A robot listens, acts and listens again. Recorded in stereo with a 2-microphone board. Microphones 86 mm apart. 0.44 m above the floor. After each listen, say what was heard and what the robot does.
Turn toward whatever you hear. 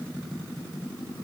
Keep listening.
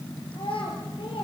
Turn 90° left.
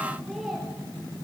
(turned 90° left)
Facing the child speaking, over 4 m away.